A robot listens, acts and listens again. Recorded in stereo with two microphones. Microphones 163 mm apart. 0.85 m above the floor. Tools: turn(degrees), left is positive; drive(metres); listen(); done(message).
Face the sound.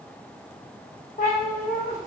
turn(degrees=55)
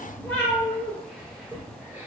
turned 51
done("Found it: a cat meowing, straight ahead, 1 to 2 m away.")